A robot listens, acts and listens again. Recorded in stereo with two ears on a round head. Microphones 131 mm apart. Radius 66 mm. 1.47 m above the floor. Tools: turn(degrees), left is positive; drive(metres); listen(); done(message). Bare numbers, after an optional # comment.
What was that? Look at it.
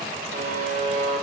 # The buzzer: about 50° right or 130° right.
turn(-50)
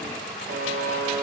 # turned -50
# So it is at 70° right.
turn(-70)
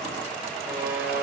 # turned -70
# The buzzer is now 15° right.
turn(-15)
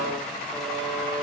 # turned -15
done("Found it: a buzzer, straight ahead, under 1 m away.")